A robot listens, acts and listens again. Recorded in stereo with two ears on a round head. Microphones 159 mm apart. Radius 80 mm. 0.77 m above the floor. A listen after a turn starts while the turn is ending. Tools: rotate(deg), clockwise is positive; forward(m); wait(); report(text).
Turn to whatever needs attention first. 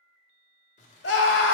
rotate(-70)
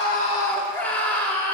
rotate(-10)
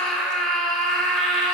report("Found it: a scream, straight ahead.")